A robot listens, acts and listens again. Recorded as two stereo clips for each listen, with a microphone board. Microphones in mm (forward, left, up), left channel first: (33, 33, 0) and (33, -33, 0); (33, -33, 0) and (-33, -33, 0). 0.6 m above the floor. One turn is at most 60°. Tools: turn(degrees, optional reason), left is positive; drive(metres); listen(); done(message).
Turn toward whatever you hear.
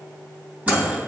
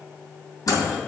turn(degrees=-30, reason="The microwave: 30° right.")
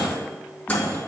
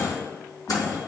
turn(degrees=15, reason="The microwave is now 15° left.")
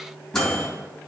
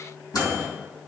done("Found it: a microwave, straight ahead.")